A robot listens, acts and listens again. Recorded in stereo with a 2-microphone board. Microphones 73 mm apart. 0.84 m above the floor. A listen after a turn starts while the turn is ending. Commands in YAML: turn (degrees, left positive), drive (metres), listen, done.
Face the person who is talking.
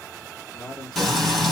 turn: 75
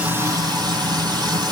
listen: true
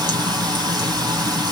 listen: true
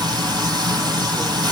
done: "I heard a man speaking, but can't make it out now. It was about straight ahead or 30° left."